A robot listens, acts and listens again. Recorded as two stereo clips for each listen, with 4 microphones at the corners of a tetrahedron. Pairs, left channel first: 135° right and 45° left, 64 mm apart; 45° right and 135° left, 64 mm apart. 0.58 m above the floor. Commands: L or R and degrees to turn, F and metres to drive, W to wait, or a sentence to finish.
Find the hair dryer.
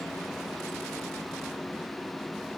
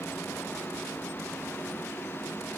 W
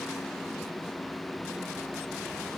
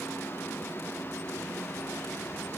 W
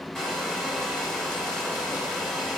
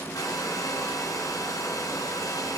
R50
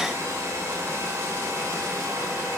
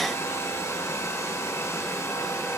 Facing the hair dryer, over 4 m away.